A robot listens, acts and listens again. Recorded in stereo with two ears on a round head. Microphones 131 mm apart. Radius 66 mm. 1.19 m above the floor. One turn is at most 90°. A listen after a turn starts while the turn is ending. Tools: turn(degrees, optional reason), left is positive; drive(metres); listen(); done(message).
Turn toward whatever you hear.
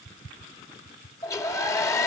turn(degrees=20, reason="The hair dryer: about 20° left or 160° left.")
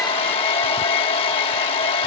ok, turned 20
turn(degrees=90, reason="So it is at 140° left.")
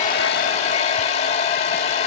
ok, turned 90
turn(degrees=45, reason="The hair dryer is now 45° left.")
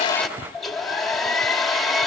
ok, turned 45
done("Found it: a hair dryer, straight ahead.")